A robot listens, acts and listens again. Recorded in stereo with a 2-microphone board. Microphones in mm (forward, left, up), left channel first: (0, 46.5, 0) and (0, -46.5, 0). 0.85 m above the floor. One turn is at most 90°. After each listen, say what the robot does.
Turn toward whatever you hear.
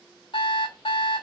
Turn 65° left.
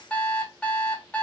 Turn 15° left.
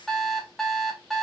Facing the alarm clock, 1 to 2 m away.